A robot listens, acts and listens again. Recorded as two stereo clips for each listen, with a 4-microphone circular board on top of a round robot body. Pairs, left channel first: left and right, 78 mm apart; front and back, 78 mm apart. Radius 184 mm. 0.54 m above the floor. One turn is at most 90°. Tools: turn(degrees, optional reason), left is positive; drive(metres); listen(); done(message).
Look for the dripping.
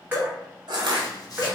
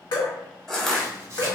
turn(degrees=-25, reason="The dripping: 25° right.")
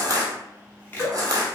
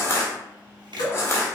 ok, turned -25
done("Facing the dripping.")